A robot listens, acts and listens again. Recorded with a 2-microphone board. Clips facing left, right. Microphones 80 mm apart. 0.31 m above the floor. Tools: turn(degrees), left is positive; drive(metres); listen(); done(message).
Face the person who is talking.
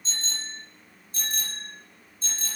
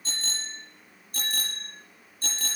listen()
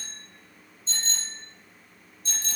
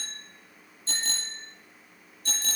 listen()
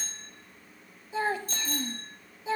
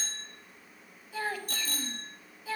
turn(degrees=25)
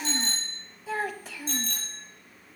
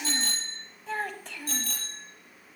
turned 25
done("Found it: a child speaking, straight ahead.")